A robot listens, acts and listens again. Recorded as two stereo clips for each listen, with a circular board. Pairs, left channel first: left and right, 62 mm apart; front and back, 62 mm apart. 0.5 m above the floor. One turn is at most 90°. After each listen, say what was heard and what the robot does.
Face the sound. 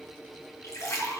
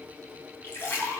The splash: 50° left. Turn 50° left.
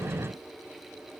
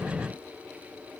Facing where the splash came from. I can't hear it now.